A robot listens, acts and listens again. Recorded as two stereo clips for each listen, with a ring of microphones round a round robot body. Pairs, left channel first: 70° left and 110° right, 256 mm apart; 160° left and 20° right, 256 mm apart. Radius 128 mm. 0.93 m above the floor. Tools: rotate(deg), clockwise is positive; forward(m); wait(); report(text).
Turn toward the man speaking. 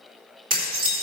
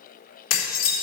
wait()
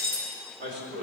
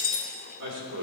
rotate(65)
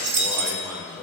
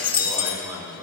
rotate(20)
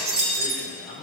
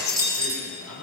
report("Facing the man speaking, over 4 m away.")